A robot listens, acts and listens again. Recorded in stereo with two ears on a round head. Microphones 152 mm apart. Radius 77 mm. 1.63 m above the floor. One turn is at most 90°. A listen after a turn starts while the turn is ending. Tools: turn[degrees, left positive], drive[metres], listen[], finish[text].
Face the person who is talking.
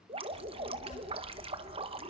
Thought: The child speaking: about 40° left or 140° left.
Action: turn[40]
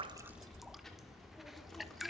Action: finish[Facing the child speaking, 2 to 4 m away.]